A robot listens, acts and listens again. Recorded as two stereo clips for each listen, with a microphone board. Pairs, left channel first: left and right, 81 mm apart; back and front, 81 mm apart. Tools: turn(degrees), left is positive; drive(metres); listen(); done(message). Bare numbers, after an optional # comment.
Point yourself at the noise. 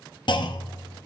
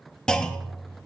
# The clunk: 100° left.
turn(100)
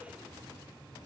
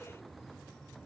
done("I heard a clunk from this way, but can't make it out now.")